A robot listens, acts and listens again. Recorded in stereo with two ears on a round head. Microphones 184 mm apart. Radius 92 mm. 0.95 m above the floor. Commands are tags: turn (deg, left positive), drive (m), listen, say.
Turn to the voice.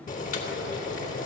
<listen/>
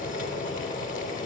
<listen/>
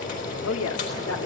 <turn deg="90"/>
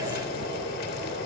<listen/>
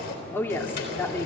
<turn deg="10"/>
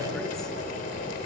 <listen/>
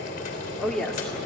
<say>Found it: a woman speaking, straight ahead, 1 to 2 m away.</say>